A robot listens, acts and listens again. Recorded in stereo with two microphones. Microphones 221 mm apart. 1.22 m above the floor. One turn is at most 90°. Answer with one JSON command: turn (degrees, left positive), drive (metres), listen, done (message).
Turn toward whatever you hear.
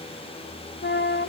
{"turn": 50}
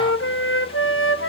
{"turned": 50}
{"turn": 75}
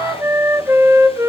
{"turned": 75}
{"turn": -10}
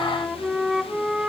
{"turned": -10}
{"done": "Facing the flute, 1 to 2 m away."}